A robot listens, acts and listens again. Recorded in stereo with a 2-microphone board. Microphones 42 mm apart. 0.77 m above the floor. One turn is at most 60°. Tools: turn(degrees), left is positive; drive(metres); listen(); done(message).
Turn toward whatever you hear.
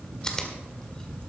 turn(degrees=15)
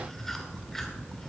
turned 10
listen()
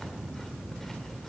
listen()
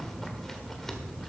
done("I heard chewing, but can't make it out now. It was about 5° left or 155° left.")